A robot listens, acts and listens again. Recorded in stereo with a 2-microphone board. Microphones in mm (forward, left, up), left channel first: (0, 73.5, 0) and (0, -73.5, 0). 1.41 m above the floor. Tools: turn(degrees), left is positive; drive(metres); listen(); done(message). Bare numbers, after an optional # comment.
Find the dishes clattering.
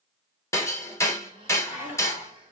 turn(-30)
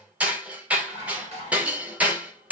# So it is at 135° right.
turn(-135)
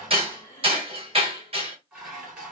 # The dishes clattering is now 10° right.
turn(-10)
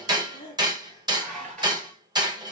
done("Found it: dishes clattering, straight ahead.")